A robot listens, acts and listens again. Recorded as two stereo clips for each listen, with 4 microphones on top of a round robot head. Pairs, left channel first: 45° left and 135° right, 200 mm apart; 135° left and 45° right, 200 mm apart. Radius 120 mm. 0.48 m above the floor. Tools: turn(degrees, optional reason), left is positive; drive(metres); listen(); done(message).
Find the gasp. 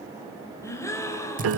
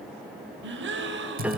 turn(degrees=-30, reason="The gasp: 30° right.")
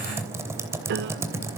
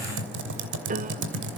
done("Facing where the gasp came from. I can't hear it now.")